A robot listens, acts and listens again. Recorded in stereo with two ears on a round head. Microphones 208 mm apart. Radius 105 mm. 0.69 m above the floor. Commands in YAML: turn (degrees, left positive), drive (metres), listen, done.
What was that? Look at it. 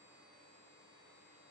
listen: true
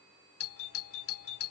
turn: 65
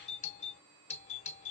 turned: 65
turn: 35
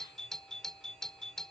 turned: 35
done: "Found it: a doorbell, straight ahead."